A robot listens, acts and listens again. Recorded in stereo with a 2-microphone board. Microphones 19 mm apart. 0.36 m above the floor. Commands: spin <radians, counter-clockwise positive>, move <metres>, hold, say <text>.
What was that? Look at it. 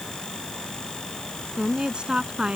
spin -0.96
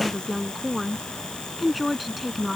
say Found it: a woman speaking, straight ahead.